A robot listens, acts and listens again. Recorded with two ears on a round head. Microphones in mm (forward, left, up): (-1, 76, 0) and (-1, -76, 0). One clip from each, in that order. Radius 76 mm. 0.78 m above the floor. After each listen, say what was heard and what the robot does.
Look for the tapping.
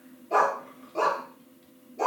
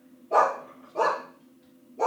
Keep listening.
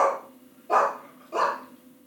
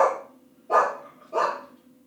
Keep listening.
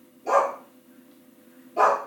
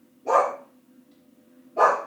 I can't make out tapping, only a dog barking.